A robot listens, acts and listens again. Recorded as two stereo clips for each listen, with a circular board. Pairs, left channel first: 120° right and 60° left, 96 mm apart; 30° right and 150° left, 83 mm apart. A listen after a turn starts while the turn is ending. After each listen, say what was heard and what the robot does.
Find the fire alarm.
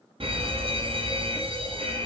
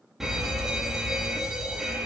The fire alarm: 65° left. Turn 65° left.
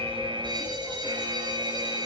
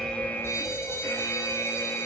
The fire alarm is now 25° left. Turn 25° left.
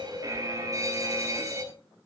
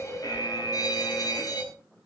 Facing the fire alarm.